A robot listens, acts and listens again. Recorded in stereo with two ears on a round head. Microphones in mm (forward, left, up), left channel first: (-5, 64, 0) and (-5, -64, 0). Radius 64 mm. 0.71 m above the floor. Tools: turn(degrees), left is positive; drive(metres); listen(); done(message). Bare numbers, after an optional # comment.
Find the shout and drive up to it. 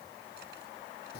listen()
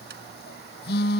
listen()
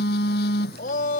# The shout: about 65° left or 115° left.
turn(65)
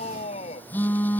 # So it is at 45° left.
turn(45)
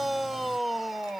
drive(1.0)
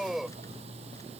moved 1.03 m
drive(1.0)
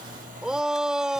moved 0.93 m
drive(1.0)
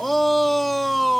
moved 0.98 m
drive(1.0)
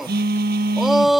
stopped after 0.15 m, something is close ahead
done("Arrived at the shout, straight ahead.")